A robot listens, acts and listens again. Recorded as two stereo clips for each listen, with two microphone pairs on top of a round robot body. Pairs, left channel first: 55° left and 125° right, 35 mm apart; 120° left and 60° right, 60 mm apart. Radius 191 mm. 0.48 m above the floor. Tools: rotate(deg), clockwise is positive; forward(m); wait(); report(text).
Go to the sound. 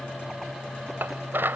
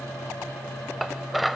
rotate(150)
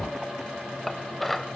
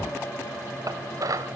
rotate(35)
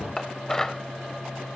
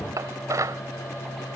rotate(25)
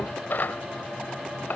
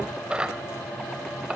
rotate(-15)
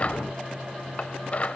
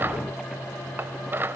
forward(1.0)
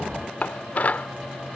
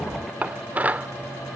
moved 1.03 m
forward(1.0)
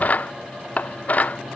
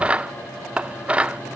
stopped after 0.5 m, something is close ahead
rotate(-10)
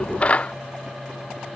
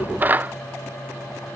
report("I am next to the dishes clattering.")